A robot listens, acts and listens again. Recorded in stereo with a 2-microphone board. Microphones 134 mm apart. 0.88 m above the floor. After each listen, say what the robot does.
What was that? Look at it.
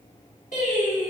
Turn 75° left.
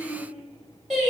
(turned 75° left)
Facing the singing, 2 to 4 m away.